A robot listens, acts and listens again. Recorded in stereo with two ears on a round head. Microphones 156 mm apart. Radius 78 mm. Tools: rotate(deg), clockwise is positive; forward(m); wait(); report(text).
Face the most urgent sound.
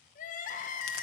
rotate(-50)
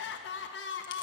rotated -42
rotate(-85)
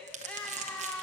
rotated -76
rotate(-10)
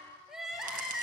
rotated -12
report("Facing the crying.")